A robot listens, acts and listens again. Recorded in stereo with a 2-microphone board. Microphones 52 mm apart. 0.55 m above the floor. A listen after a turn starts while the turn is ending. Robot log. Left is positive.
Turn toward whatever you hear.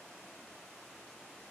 cmd idle
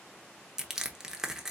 cmd yaw -30
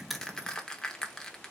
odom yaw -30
note: So it is at 15° left.
cmd yaw +15
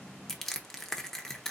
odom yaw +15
note: The crushing is now 10° left.
cmd yaw +10
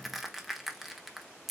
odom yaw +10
end: Facing the crushing.